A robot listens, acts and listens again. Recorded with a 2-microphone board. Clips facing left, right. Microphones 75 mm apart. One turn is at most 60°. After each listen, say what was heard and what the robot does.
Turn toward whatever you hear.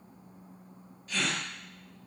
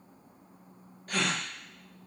The gasp: about 55° right or 125° right. Turn 55° right.
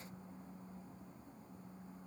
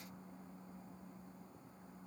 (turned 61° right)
Keep listening.
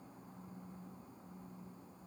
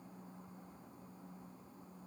I heard a gasp, but can't make it out now. It was about 10° left or 65° right.